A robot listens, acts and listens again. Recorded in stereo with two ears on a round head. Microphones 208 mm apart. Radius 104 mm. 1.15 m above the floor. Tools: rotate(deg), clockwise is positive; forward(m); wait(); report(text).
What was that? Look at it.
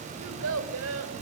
rotate(65)
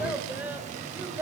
rotate(10)
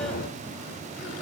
wait()
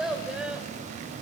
report("Found it: a child speaking, straight ahead, 2 to 4 m away.")